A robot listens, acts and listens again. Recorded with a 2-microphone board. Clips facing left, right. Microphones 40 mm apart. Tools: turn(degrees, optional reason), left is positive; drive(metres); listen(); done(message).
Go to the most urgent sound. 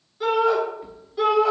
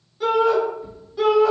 turn(degrees=30)
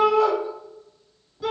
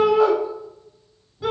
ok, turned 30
turn(degrees=-25, reason="So it is at 25° right.")
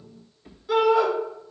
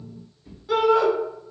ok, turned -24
drive(metres=1.0)
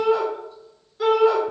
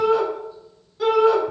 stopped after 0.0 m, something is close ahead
done("Blocked. The shout is further on, straight ahead.")